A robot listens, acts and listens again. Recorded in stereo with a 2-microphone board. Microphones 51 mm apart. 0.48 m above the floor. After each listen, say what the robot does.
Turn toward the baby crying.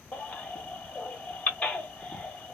Turn 30° left.
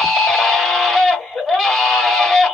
Found it: a baby crying, straight ahead, 1 to 2 m away.